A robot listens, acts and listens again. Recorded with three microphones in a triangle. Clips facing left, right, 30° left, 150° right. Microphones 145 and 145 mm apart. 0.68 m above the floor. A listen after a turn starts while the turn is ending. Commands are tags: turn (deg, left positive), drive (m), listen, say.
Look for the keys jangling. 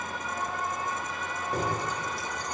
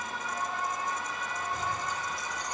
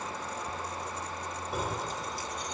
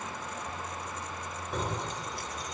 <turn deg="115"/>
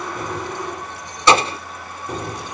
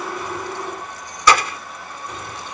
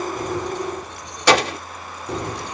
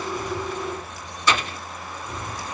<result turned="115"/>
<turn deg="40"/>
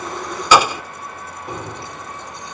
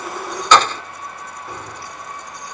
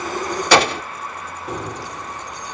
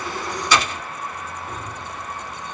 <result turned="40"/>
<turn deg="25"/>
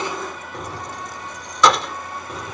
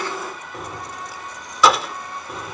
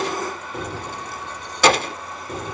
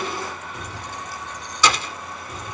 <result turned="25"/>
<say>Facing the keys jangling.</say>